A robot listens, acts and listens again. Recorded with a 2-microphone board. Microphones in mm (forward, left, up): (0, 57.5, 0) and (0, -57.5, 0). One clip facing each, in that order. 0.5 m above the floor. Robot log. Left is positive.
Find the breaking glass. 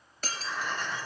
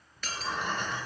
note: The breaking glass: about 40° left or 140° left.
cmd yaw +40
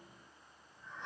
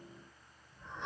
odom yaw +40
cmd idle
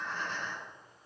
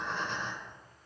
end: I heard breaking glass, but can't make it out now. It was about straight ahead or 100° left.